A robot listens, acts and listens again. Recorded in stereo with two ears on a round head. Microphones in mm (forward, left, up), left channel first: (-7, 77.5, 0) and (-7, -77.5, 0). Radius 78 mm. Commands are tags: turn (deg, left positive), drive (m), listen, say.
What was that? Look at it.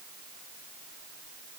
<listen/>
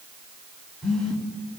<turn deg="30"/>
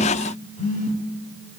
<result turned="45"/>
<turn deg="130"/>
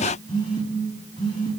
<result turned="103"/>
<turn deg="25"/>
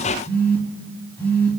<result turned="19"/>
<turn deg="10"/>
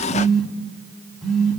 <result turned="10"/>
<say>Facing the phone buzzing.</say>